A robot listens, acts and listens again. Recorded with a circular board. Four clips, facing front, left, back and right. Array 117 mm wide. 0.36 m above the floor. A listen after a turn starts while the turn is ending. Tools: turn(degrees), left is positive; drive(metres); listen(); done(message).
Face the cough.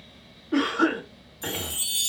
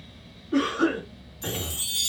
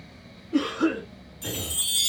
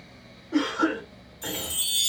turn(degrees=-15)
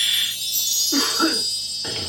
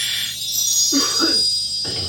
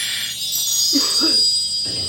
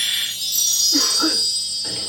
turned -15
listen()
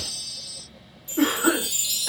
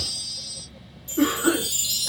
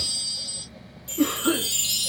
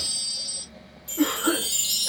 listen()
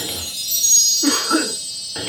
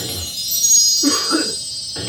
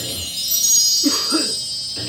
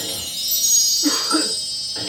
done("I heard a cough from this way, but can't make it out now.")